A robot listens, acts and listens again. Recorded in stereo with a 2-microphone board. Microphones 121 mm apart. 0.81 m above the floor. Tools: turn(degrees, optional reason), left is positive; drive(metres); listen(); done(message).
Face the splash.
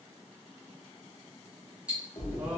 turn(degrees=45, reason="The splash: about 45° left or 135° left.")
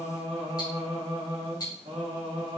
listen()
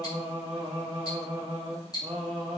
done("I heard a splash, but can't make it out now. It was about straight ahead or 90° left.")